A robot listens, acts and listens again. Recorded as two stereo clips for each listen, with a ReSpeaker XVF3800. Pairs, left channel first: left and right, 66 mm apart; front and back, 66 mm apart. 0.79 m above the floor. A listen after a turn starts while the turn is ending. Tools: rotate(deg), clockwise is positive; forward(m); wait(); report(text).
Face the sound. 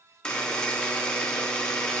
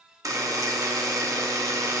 rotate(-165)
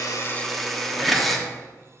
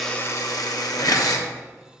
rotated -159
report("Found it: a buzzer, straight ahead.")